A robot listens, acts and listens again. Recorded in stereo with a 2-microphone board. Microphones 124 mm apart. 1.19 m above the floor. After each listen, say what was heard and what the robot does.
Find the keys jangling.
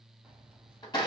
Turn 30° right.
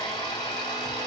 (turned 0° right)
Keep listening.
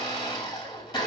Keep listening.
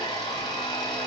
I heard keys jangling, but can't make it out now. It was about 10° right or 170° right.